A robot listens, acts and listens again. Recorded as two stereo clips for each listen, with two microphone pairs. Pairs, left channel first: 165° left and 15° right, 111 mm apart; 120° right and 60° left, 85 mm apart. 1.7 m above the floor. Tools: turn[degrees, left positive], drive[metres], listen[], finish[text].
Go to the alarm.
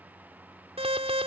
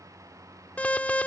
Thought: The alarm: 45° right.
Action: turn[-45]
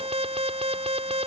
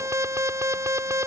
Thought: The alarm is now 10° left.
Action: turn[10]
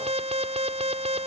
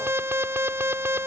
Action: drive[1.0]
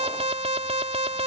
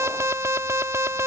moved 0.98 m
Action: drive[1.0]
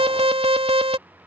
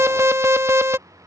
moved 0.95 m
Action: drive[1.0]
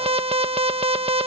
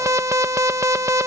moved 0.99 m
Thought: The alarm is now 10° left.
Action: turn[10]
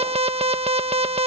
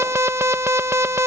Action: drive[1.0]
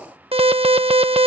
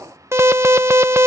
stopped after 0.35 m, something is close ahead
Action: finish[Arrived at the alarm, straight ahead.]